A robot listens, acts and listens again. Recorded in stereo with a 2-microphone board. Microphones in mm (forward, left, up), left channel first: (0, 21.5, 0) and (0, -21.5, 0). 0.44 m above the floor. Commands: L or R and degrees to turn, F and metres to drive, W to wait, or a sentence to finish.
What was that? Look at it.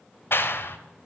L65
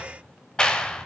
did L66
L25
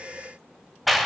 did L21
Found it: a clap, straight ahead, 1 to 2 m away.